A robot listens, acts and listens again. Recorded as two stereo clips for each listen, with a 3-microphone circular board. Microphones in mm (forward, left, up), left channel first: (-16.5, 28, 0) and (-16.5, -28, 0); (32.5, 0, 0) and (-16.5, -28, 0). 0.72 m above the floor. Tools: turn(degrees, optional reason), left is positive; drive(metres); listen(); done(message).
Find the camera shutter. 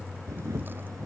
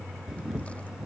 turn(degrees=-75, reason="The camera shutter: 75° right.")
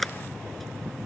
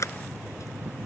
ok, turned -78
done("Facing the camera shutter.")